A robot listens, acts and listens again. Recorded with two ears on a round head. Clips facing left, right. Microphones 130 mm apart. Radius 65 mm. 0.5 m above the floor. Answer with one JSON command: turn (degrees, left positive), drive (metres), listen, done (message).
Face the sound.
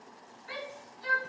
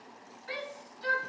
{"turn": -65}
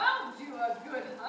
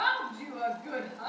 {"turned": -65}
{"turn": -50}
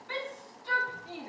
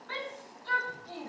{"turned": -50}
{"turn": 20}
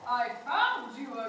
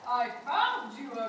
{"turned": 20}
{"done": "Facing the shout, over 4 m away."}